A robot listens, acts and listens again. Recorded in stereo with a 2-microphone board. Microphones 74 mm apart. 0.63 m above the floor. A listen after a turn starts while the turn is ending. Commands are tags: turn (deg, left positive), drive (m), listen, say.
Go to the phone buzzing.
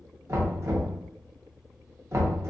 <listen/>
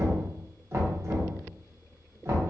<listen/>
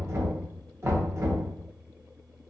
<say>I can't make out a phone buzzing to turn to.</say>